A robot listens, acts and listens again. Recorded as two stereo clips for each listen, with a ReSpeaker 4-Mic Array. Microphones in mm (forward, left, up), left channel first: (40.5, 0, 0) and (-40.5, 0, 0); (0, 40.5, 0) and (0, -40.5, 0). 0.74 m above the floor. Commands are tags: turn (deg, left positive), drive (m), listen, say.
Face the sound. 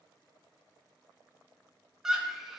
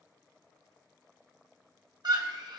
<turn deg="-95"/>
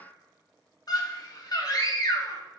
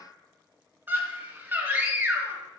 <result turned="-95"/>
<turn deg="-25"/>
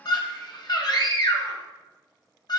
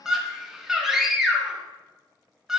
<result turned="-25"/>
<say>Facing the scream, 1 to 2 m away.</say>